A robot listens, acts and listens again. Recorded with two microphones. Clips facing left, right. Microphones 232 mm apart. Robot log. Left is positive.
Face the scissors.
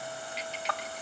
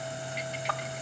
cmd idle
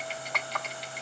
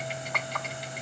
cmd idle
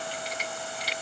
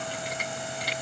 end: I can't make out scissors, only typing on a keyboard.